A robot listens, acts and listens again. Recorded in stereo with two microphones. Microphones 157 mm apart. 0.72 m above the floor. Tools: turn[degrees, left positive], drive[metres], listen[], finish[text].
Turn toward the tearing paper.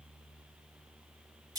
Action: listen[]
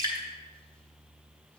Action: listen[]
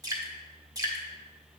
Action: finish[I can't make out tearing paper to turn to.]